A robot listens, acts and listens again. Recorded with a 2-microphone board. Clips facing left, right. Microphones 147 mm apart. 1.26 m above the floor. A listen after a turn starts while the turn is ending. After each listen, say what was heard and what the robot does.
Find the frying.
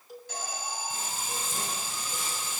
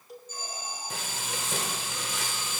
Turn 90° right.
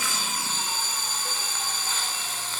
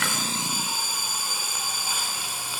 So it is at 10° right. Turn 10° right.
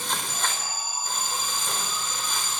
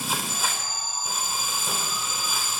Found it: frying, straight ahead.